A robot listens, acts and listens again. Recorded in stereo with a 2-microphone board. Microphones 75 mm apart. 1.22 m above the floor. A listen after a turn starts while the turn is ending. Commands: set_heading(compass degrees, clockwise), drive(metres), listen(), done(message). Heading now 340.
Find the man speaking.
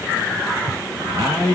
set_heading(50)
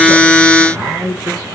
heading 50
set_heading(95)
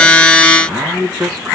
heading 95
set_heading(105)
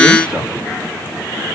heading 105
listen()
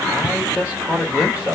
set_heading(120)
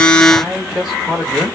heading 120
done("Facing the man speaking, 2 to 4 m away.")